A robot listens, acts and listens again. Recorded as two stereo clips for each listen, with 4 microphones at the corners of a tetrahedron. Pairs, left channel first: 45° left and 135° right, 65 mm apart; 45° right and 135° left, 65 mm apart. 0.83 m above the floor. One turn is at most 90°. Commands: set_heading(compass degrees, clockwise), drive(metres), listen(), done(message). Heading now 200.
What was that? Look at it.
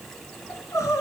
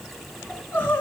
set_heading(185)
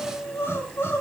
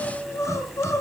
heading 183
done("Facing the crying.")